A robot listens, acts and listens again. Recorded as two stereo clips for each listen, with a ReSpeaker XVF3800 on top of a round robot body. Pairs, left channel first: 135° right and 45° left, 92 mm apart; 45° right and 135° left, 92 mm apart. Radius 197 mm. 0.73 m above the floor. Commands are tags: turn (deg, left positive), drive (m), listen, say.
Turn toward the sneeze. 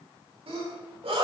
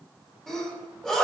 <turn deg="35"/>
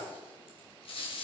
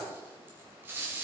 <say>Facing where the sneeze came from. I can't hear it now.</say>